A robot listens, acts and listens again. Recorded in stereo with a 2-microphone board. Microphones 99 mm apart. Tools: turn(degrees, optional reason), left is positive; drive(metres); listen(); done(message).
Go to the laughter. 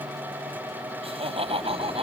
turn(degrees=-90)
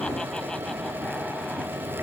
listen()
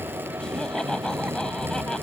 listen()
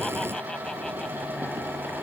done("Facing where the laughter came from. I can't hear it now. I did not reach it.")